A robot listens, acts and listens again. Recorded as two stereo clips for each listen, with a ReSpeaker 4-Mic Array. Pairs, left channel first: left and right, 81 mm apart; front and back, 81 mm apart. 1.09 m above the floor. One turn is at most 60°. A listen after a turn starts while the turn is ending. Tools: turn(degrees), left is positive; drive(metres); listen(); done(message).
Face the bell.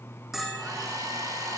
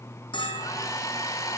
done("Facing the bell, over 4 m away.")